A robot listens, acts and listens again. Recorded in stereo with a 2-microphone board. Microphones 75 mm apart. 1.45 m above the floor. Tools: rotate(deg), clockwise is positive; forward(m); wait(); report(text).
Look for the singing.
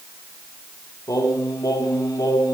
rotate(-50)
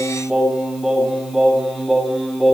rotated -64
report("Found it: singing, straight ahead.")